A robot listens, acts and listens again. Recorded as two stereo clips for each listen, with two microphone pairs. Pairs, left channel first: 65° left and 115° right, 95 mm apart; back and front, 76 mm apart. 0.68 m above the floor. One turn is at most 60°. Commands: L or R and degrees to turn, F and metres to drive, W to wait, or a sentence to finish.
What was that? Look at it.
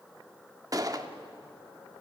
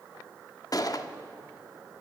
R60
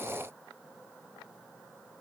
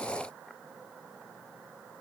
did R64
R60
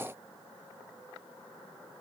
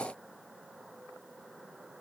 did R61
R30
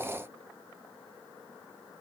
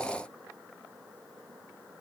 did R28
I heard a gunshot from this way, but can't make it out now.